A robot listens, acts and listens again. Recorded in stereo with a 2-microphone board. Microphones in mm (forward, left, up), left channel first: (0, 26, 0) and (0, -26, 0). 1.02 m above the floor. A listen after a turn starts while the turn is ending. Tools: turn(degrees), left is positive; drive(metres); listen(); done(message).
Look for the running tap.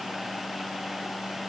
listen()
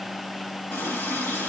turn(degrees=45)
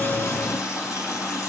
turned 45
turn(degrees=95)
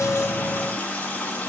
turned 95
turn(degrees=25)
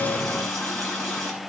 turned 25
done("Found it: a running tap, straight ahead.")